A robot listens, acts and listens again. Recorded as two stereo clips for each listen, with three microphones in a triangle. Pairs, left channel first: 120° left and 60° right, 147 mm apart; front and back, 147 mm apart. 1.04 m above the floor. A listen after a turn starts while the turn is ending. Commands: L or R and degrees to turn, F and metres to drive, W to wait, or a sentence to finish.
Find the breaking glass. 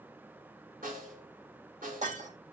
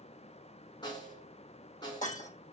R25
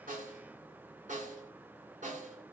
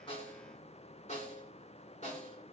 Facing where the breaking glass came from. I can't hear it now.